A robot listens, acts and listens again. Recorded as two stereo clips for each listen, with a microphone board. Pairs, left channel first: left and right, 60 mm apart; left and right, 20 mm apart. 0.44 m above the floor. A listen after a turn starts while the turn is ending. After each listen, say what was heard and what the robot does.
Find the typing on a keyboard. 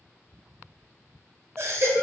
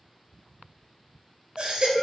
Keep listening.
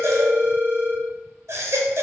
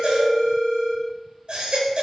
Keep listening.
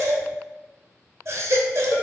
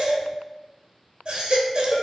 I can't make out typing on a keyboard to turn to.